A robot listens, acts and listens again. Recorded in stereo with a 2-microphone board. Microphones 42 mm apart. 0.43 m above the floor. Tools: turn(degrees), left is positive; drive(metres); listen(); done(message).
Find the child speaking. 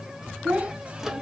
turn(degrees=-25)
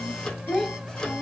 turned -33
turn(degrees=15)
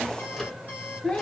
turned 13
turn(degrees=25)
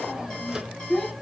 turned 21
turn(degrees=15)
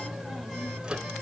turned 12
listen()
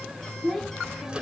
turn(degrees=10)
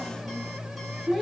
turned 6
done("Facing the child speaking.")